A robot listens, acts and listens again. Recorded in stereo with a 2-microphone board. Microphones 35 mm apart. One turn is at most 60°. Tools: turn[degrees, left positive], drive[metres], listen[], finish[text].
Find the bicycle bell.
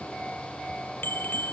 Action: turn[60]
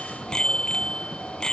Thought: So it is at 20° left.
Action: turn[20]
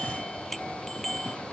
Action: finish[Found it: a bicycle bell, straight ahead.]